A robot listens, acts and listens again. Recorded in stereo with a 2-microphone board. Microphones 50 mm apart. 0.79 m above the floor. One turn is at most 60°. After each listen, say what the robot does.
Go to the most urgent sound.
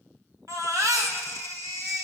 Turn 60° right.
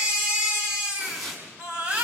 Turn 25° right.
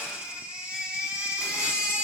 Turn 25° right.
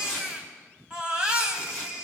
Turn 20° right.
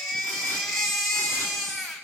Drive 1.0 m forward.
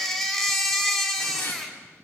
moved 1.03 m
Drive 1.0 m forward.
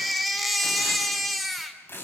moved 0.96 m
Drive 1.0 m forward.
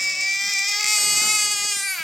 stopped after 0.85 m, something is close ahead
Arrived at the baby crying, straight ahead.